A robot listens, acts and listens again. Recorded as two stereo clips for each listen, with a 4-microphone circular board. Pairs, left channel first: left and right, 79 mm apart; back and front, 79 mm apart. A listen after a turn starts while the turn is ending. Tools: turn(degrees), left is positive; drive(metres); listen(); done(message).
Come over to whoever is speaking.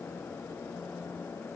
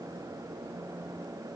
listen()
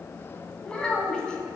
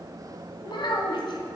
turn(degrees=170)
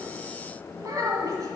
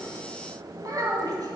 turn(degrees=-45)
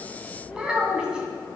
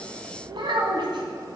turn(degrees=-10)
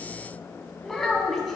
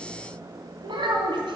drive(metres=1.0)
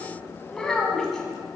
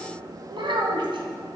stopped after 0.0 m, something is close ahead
done("Blocked. The child speaking is further on, straight ahead.")